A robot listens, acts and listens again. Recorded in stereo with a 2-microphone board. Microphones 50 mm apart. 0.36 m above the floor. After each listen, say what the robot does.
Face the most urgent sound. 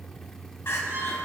Turn 55° left.
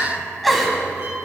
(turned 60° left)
Facing the crying, 1 to 2 m away.